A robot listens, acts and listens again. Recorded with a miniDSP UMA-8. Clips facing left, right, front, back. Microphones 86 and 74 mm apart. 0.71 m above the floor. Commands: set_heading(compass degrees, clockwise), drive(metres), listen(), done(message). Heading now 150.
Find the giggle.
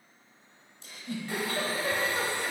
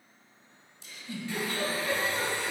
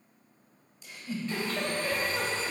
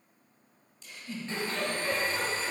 set_heading(75)
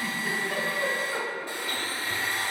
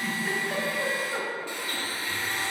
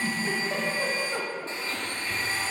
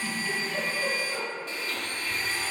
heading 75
done("Facing the giggle, 1 to 2 m away.")